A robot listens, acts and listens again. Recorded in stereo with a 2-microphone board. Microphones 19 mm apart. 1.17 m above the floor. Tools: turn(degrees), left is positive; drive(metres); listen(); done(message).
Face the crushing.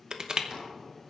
turn(degrees=-45)
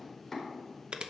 turn(degrees=-85)
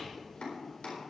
listen()
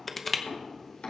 done("Facing the crushing.")